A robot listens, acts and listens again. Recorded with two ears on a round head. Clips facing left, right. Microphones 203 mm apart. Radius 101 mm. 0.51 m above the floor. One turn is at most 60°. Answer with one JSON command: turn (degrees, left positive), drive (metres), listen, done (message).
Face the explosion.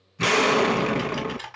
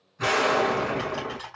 {"turn": 45}
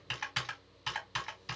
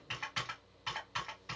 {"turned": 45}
{"listen": true}
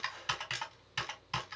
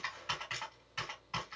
{"done": "I heard an explosion, but can't make it out now. It was about straight ahead or 90° left."}